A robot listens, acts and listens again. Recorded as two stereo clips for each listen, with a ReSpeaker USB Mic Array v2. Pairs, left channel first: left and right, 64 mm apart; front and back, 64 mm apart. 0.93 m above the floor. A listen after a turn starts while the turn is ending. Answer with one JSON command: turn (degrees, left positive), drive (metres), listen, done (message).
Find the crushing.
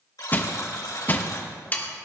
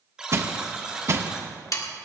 {"turn": 145}
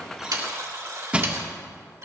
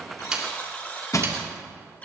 {"turn": -20}
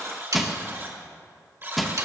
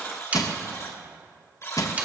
{"done": "Facing the crushing."}